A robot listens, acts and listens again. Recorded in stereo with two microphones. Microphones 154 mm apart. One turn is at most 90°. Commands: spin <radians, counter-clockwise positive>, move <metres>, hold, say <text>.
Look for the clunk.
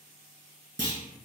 spin 0.61
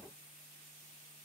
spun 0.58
hold
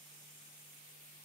say I heard a clunk, but can't make it out now. It was about straight ahead or 115° left.